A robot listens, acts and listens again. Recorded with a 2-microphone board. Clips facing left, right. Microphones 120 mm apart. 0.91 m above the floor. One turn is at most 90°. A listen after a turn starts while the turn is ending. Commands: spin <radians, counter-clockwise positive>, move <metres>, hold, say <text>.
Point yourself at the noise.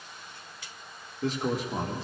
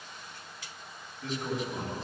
spin 1.57
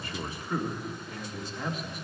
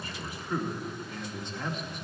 say Found it: a man speaking, straight ahead.